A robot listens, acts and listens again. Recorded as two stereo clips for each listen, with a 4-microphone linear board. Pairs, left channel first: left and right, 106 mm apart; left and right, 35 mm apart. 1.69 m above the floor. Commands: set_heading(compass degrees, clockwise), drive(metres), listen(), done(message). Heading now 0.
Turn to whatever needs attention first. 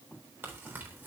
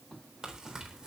listen()
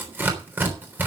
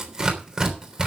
listen()
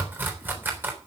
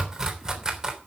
done("I can't make out anything urgent to turn to.")